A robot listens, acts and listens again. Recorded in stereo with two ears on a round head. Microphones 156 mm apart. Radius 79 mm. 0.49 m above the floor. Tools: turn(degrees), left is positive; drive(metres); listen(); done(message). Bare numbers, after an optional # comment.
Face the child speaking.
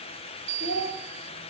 # The child speaking: about 65° left or 115° left.
turn(65)
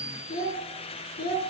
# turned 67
# So it is at 55° left.
turn(55)
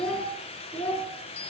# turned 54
# The child speaking is now 10° left.
turn(10)
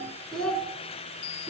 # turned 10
# The child speaking is now 10° left.
turn(10)
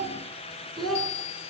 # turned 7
done("Facing the child speaking, over 4 m away.")